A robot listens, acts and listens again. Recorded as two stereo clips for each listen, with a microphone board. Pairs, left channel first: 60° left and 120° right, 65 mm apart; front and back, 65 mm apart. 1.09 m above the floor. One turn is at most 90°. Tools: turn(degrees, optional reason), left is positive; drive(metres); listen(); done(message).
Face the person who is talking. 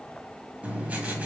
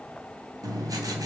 listen()
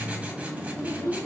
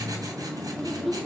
turn(degrees=90, reason="The child speaking: 95° left.")
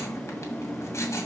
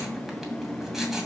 listen()
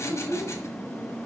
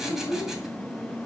turn(degrees=15, reason="The child speaking is now 15° left.")
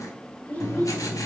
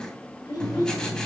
done("Found it: a child speaking, straight ahead, 2 to 4 m away.")